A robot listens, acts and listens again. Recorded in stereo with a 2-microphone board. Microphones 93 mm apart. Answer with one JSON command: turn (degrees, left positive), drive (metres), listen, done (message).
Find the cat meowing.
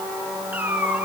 {"turn": -20}
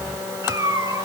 {"turn": -145}
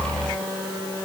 {"listen": true}
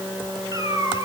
{"turn": -40}
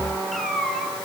{"done": "Found it: a cat meowing, straight ahead."}